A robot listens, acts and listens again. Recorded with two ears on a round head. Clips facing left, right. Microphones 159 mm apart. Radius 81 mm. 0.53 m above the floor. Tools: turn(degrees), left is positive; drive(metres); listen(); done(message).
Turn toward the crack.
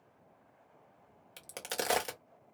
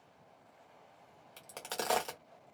turn(degrees=30)
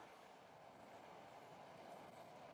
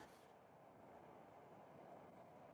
listen()
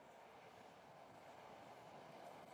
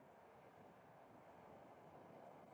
done("I heard a crack, but can't make it out now. It was about 15° right or 135° left.")